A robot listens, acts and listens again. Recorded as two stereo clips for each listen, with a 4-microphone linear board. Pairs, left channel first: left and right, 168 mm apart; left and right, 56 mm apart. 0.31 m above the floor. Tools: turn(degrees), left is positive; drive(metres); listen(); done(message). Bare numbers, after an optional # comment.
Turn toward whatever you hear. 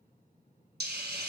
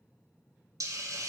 # The hiss: about 75° right or 105° right.
turn(-75)
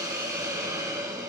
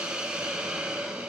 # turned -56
# So it is at 20° right.
turn(-20)
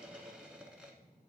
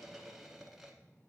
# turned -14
done("Found it: a hiss, straight ahead.")